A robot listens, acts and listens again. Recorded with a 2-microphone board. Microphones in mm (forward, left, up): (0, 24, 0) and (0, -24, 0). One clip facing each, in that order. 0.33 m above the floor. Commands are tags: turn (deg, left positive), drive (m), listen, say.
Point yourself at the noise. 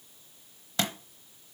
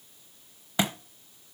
<turn deg="-15"/>
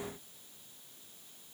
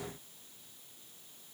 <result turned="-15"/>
<listen/>
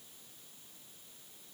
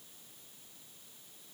<say>I heard a thud, but can't make it out now. It was about straight ahead or 150° right.</say>